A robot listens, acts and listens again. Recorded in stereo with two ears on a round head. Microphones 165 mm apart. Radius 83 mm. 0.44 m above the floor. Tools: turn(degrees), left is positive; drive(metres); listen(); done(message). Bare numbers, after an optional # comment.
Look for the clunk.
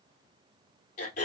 listen()
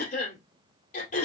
listen()
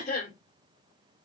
done("I can't make out a clunk to turn to.")